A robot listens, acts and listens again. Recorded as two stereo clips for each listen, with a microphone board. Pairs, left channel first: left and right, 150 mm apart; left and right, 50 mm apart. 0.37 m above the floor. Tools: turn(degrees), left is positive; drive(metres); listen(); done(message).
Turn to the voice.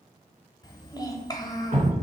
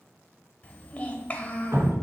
turn(degrees=25)
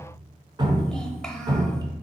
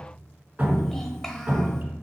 listen()
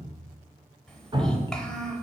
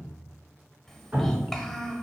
done("Facing the child speaking.")